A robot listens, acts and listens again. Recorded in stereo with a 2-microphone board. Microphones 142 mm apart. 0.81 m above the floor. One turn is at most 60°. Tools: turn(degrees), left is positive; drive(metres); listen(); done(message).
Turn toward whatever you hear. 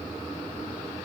listen()
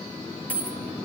turn(degrees=30)
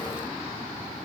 listen()
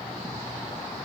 done("I heard a dropped coin, but can't make it out now. It was about 20° right or 140° left.")